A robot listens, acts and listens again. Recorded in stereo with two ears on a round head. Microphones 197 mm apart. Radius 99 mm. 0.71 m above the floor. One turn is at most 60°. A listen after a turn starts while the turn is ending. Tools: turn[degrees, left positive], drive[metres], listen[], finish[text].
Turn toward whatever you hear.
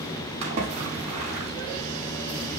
Thought: The splash: about 30° right or 150° right.
Action: turn[-30]
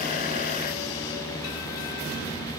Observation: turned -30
Action: listen[]
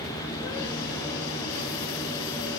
Action: finish[I heard a splash, but can't make it out now. It was about straight ahead or 120° right.]